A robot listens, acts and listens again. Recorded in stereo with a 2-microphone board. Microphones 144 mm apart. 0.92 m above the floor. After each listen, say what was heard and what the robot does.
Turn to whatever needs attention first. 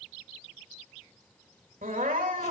Turn 90° right.
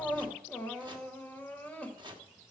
So it is at 10° left. Turn 10° left.
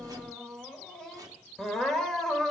Found it: crying, straight ahead, 1 to 2 m away.